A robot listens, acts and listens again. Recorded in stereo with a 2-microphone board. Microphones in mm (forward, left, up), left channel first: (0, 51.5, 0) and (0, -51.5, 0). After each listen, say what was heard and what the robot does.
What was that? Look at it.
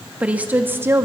The woman speaking: about 25° right or 155° right. Turn 25° right.
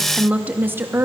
The woman speaking: about 25° right or 155° right. Turn 25° right.
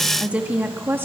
The woman speaking: about 20° right or 160° right. Turn 20° right.
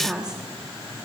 Turn 30° right.
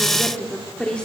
So it is at 10° left. Turn 10° left.
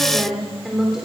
Facing the woman speaking.